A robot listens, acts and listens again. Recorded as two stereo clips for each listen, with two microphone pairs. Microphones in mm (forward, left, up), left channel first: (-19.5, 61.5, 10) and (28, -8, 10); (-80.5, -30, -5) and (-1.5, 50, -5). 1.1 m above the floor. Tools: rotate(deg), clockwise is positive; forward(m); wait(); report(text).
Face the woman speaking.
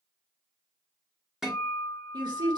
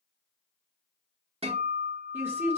rotate(25)
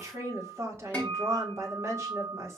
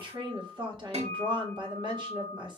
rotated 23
report("Facing the woman speaking.")